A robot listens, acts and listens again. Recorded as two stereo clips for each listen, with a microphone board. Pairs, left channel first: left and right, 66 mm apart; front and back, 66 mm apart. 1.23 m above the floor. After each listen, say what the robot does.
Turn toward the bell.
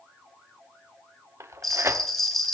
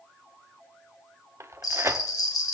Facing the bell.